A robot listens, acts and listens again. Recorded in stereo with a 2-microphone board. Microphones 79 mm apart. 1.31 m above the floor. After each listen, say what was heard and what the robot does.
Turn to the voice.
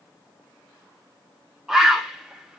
Keep listening.
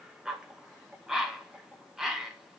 Keep listening.
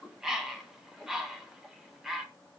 I can't make out anyone speaking, only a bird.